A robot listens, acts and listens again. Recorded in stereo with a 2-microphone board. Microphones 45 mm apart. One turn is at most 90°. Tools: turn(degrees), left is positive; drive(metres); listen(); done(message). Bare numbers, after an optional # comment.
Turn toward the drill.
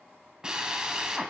# The drill: about 20° right or 160° right.
turn(-20)
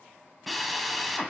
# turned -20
done("Found it: a drill, straight ahead.")